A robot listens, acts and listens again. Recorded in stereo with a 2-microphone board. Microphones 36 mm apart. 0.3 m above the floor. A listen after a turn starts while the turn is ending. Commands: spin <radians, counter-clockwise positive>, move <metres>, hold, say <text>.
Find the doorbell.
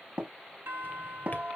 spin -1.13
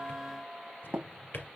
spin -0.61
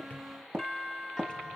say Facing the doorbell, over 4 m away.